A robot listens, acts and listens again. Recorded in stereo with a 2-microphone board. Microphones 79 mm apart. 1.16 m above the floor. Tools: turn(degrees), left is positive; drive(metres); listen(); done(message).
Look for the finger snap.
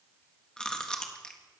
listen()
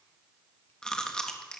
listen()
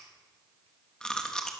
done("I can't make out a finger snap, only chewing.")